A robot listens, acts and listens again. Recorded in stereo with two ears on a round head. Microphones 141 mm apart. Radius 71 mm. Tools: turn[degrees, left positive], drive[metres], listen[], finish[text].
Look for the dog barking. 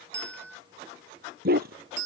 Thought: The dog barking: about 70° right or 110° right.
Action: turn[-70]
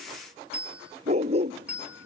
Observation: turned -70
Thought: So it is at 40° right.
Action: turn[-40]
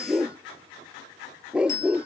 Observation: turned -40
Action: finish[Facing the dog barking.]